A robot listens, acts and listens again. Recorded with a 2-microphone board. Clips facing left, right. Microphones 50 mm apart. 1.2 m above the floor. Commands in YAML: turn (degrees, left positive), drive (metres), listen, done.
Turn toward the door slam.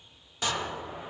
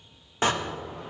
turn: -40
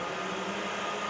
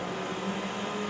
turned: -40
listen: true
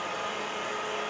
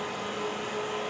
done: "I heard a door slam, but can't make it out now. It was about straight ahead or 100° right."